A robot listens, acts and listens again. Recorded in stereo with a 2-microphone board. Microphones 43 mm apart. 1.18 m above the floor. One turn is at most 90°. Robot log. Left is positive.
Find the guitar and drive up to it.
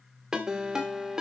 note: The guitar: about 20° right or 160° right.
cmd yaw -20
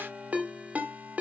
cmd idle
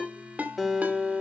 cmd fwd 1.0
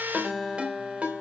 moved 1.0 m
cmd fwd 1.0
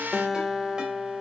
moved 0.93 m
cmd fwd 1.0
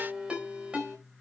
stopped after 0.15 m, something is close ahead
note: The guitar is now 10° left.
cmd yaw +10
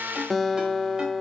end: Arrived at the guitar, straight ahead.